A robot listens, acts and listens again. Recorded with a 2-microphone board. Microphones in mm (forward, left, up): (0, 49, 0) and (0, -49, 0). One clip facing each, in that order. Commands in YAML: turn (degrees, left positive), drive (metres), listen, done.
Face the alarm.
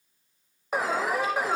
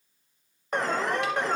turn: 30
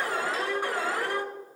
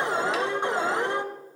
turn: -25
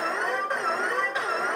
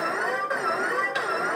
done: "Found it: an alarm, straight ahead."